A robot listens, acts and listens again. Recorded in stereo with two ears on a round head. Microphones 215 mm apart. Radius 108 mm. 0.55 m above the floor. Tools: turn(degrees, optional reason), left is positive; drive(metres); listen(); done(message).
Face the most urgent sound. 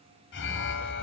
turn(degrees=50, reason="The alarm: about 50° left or 130° left.")
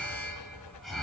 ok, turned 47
done("Found it: an alarm, straight ahead, 2 to 4 m away.")